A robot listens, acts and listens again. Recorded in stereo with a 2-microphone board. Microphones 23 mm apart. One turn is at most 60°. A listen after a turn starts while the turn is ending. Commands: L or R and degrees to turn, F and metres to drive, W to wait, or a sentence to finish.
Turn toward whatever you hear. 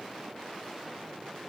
W
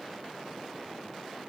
W
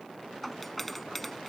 L30
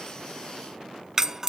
R20
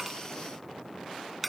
Found it: a doorbell, straight ahead.